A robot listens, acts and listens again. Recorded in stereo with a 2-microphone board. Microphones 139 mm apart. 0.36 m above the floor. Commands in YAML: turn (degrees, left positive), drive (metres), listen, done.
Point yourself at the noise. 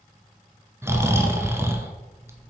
turn: -20
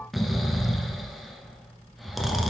done: "Found it: snoring, straight ahead, under 1 m away."